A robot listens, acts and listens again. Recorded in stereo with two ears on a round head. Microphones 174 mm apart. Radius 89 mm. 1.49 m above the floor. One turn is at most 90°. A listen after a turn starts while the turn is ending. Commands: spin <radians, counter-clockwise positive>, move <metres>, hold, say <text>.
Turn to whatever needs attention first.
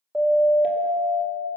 spin -0.52
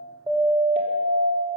spin -1.57
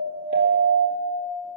spin -1.48
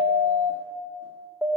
say Facing the siren, 2 to 4 m away.